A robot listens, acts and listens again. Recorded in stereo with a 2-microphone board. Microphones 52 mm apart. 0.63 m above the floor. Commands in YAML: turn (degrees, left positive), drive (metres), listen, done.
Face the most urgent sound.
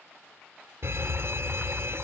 turn: -60
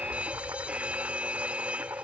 turn: -30
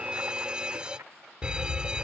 turn: -20
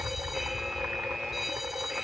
done: "Found it: a fire alarm, straight ahead."